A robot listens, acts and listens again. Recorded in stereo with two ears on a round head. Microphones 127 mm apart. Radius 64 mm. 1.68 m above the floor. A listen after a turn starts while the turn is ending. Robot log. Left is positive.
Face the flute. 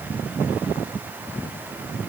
cmd idle
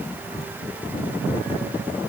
cmd idle
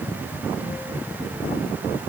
end: I can't make out a flute.